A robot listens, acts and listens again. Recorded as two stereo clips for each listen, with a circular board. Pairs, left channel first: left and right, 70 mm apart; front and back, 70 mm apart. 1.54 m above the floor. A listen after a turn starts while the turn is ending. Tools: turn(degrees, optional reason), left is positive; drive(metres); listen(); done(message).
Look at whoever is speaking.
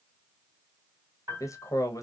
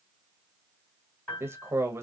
turn(degrees=130, reason="The man speaking: 130° left.")
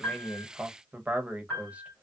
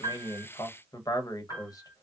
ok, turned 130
turn(degrees=-20, reason="The man speaking is now 20° right.")
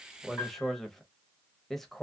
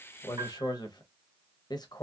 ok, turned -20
done("Found it: a man speaking, straight ahead.")